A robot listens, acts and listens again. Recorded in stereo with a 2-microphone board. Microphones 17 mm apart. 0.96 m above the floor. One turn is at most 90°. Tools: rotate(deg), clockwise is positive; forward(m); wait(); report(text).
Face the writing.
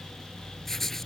rotate(-25)
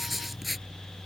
report("Found it: writing, straight ahead.")